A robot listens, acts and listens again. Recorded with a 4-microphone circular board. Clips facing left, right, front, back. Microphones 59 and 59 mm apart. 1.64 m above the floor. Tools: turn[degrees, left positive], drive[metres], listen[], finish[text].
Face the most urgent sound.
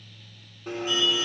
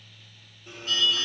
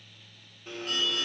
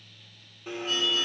Thought: The alarm: 15° left.
Action: turn[15]
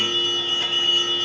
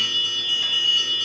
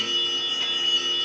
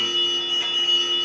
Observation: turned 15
Action: finish[Found it: an alarm, straight ahead.]